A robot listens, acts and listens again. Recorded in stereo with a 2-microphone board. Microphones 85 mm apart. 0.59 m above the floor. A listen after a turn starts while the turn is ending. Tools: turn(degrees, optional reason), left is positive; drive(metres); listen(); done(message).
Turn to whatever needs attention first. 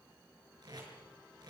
listen()
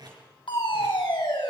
turn(degrees=75, reason="The fire alarm: about 75° left or 105° left.")
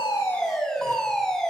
done("Found it: a fire alarm, straight ahead, over 4 m away.")